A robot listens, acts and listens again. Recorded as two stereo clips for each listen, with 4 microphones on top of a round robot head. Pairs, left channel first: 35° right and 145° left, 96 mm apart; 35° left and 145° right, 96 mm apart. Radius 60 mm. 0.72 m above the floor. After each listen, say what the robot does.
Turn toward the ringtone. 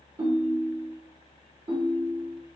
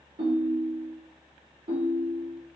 Turn 170° right.
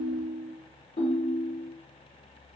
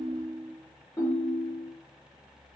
Turn 30° right.
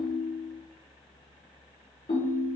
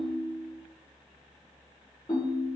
Turn 20° right.
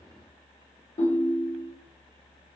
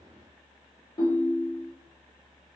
Facing the ringtone.